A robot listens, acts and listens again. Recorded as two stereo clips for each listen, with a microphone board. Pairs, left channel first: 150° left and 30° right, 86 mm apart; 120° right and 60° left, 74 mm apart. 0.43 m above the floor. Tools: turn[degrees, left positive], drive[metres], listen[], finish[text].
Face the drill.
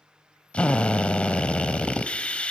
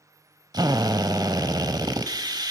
Thought: The drill: 75° left.
Action: turn[75]
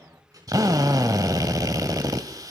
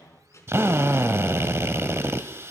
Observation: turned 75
Thought: The drill is now 10° left.
Action: turn[10]
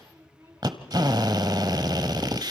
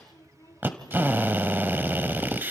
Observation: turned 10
Action: finish[Facing the drill, 1 to 2 m away.]